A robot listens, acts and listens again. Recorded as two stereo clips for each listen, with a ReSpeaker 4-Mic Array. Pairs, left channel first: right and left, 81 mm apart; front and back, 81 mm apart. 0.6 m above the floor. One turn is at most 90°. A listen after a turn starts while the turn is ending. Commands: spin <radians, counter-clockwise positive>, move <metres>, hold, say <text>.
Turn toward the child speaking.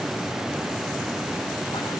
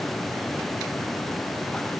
hold
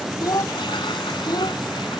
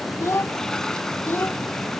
spin -1.05
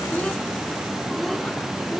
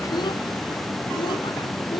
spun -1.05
hold
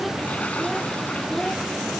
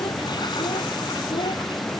hold
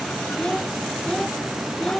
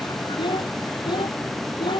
say Found it: a child speaking, straight ahead.